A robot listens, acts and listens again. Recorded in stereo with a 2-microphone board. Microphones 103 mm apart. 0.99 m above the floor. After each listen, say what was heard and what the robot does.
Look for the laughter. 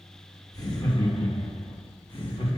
The laughter: about 60° left or 120° left. Turn 60° left.
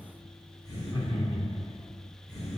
So it is at 25° left. Turn 25° left.
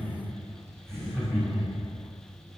Found it: laughter, straight ahead, 2 to 4 m away.